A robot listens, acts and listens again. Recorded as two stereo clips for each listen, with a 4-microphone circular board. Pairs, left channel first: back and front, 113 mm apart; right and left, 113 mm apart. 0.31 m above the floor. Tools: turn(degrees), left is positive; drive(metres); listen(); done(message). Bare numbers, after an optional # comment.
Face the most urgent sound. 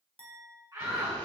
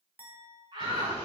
# The shout: 55° left.
turn(55)
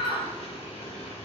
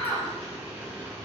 # The shout is now 10° right.
turn(-10)
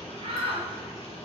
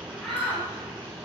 done("Found it: a shout, straight ahead.")